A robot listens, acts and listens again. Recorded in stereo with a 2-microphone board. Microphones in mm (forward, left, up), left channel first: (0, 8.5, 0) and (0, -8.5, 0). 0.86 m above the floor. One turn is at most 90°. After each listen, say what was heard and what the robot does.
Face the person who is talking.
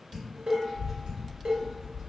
The child speaking: about 20° right or 160° right. Turn 20° right.
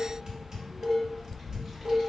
Found it: a child speaking, straight ahead, 1 to 2 m away.